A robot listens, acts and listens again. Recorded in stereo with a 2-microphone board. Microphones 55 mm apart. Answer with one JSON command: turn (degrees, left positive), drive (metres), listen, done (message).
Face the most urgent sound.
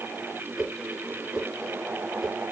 {"listen": true}
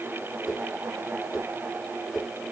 {"listen": true}
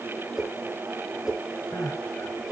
{"turn": 60}
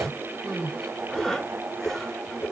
{"done": "Facing the crying."}